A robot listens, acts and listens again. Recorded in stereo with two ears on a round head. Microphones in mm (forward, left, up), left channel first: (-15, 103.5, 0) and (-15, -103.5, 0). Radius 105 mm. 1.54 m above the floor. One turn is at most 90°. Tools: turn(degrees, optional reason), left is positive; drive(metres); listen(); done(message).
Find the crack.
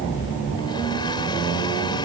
listen()
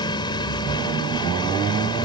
listen()
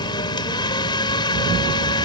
done("I can't make out a crack to turn to.")